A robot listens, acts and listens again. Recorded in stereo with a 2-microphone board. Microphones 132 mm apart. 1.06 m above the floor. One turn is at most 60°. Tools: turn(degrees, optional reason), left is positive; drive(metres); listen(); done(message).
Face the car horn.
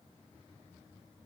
listen()
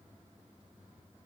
listen()
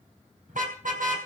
turn(degrees=-60)
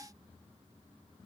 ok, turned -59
turn(degrees=-30, reason="Nothing new. It was at 30° right.")
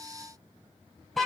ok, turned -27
done("Found it: a car horn, straight ahead, 2 to 4 m away.")